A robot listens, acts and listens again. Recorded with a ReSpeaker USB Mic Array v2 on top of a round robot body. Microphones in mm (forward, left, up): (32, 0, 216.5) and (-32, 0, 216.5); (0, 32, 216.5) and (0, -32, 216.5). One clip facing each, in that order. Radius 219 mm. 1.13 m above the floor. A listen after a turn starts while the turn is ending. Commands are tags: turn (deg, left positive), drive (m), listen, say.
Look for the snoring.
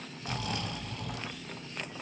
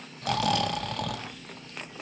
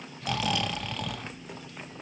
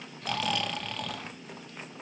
<turn deg="175"/>
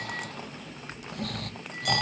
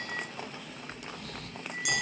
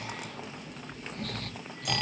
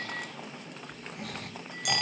<turn deg="-10"/>
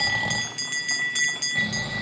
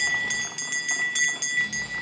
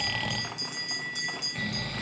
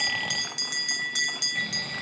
<say>Found it: snoring, straight ahead, 1 to 2 m away.</say>